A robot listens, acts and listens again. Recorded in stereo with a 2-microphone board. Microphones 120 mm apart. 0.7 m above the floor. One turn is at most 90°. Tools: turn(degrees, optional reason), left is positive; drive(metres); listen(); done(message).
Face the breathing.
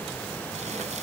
listen()
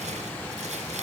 listen()
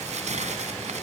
done("I can't make out breathing to turn to.")